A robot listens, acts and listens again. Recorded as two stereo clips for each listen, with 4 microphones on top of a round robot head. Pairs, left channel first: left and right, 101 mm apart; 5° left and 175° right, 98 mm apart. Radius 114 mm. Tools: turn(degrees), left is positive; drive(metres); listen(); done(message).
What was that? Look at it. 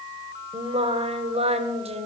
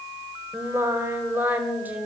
turn(degrees=-100)
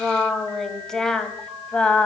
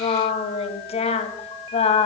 turn(degrees=10)
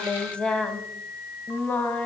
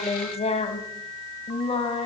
turn(degrees=15)
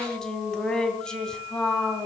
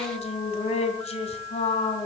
done("Found it: singing, straight ahead, 2 to 4 m away.")